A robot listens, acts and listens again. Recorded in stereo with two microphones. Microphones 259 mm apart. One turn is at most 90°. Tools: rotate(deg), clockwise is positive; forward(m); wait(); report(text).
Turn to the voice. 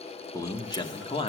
rotate(-20)
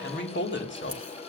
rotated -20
rotate(-90)
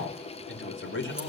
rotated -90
rotate(-45)
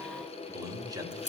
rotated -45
rotate(15)
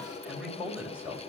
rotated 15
report("Found it: a man speaking, straight ahead.")